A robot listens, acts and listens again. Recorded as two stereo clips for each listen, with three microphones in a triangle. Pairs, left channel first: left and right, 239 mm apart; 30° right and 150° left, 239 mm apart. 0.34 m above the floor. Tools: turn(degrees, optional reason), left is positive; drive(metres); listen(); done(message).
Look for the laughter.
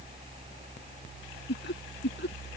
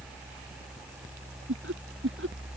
turn(degrees=125, reason="The laughter: 125° left.")
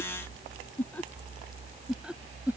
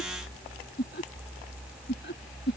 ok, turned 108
turn(degrees=-10, reason="The laughter is now 10° right.")
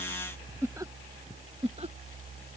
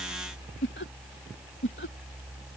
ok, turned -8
turn(degrees=-35, reason="The laughter is now 35° right.")
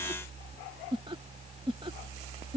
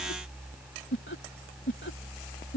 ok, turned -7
turn(degrees=-30, reason="The laughter is now 30° right.")
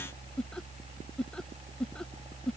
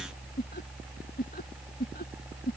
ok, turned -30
done("Facing the laughter.")